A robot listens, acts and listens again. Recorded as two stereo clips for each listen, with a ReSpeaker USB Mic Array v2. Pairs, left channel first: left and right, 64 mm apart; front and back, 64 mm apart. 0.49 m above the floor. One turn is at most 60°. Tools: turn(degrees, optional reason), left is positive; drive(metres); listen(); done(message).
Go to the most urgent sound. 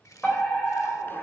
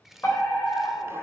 turn(degrees=30, reason="The fire alarm: 30° left.")
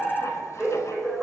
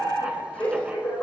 drive(metres=1.0)
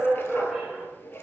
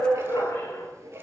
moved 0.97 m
drive(metres=1.0)
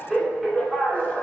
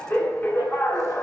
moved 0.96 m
drive(metres=1.0)
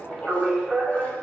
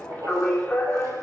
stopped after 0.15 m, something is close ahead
done("I am next to the fire alarm.")